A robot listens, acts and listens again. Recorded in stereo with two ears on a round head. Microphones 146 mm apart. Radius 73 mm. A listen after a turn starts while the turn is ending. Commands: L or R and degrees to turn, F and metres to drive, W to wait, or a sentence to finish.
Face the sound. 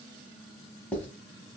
L30
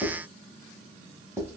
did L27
R15
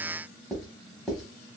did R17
Facing the writing, under 1 m away.